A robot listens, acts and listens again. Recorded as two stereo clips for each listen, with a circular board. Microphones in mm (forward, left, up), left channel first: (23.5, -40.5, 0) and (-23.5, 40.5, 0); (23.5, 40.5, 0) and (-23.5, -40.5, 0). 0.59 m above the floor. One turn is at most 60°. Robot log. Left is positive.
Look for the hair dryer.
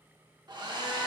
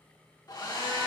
note: The hair dryer: 95° left.
cmd yaw +60
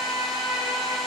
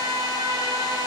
note: Nothing new. It was at 35° left.
cmd yaw +35
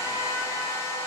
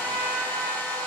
end: Facing the hair dryer.